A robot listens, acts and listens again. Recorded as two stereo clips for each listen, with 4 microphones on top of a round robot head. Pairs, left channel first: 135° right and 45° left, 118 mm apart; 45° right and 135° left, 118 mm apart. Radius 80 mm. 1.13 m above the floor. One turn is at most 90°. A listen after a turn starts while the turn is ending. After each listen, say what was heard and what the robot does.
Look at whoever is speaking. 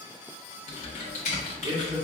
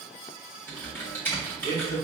The man speaking: 20° right. Turn 20° right.
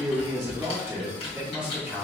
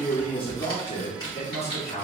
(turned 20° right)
The man speaking is now 45° right. Turn 45° right.
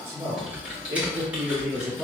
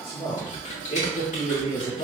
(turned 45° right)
The man speaking is now 20° right. Turn 20° right.
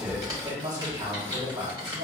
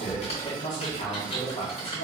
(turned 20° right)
Facing the man speaking, 1 to 2 m away.